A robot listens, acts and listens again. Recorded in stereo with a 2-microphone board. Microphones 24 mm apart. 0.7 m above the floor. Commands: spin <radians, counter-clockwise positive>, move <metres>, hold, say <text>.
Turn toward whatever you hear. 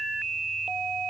hold
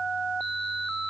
hold
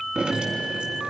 spin -0.70
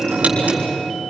spin -1.83
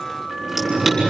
spin -0.17
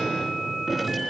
say Facing the dripping.